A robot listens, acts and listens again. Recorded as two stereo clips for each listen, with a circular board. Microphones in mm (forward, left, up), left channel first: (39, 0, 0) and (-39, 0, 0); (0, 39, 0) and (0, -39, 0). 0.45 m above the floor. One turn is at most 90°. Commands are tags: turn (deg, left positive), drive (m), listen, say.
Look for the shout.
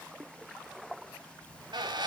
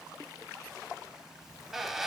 <listen/>
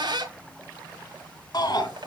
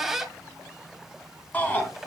<turn deg="25"/>
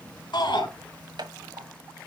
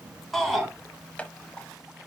<say>Facing the shout.</say>